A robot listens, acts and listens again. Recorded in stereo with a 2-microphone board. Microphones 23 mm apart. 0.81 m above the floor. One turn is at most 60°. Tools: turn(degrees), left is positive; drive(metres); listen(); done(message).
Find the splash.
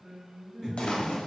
turn(degrees=55)
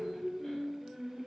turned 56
listen()
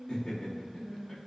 done("I heard a splash, but can't make it out now. It was about straight ahead or 70° left.")